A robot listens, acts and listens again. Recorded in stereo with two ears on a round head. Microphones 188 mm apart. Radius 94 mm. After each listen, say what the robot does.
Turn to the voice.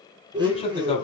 Turn 30° left.
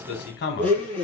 Turn 120° left.
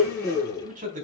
Turn 40° right.
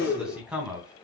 Facing the man speaking.